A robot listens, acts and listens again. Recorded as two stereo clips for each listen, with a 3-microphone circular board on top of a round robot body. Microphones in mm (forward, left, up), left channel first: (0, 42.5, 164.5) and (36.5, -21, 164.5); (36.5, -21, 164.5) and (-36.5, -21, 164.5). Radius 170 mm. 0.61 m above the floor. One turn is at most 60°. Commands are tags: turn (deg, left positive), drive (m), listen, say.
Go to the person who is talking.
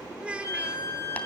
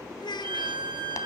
<turn deg="15"/>
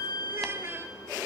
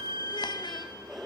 <listen/>
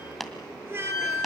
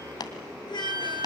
<drive m="1.0"/>
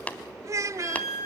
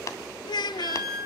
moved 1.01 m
<turn deg="-15"/>
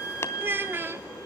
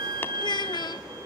<drive m="1.0"/>
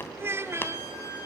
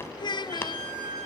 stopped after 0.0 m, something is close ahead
<say>Arrived at the child speaking, straight ahead.</say>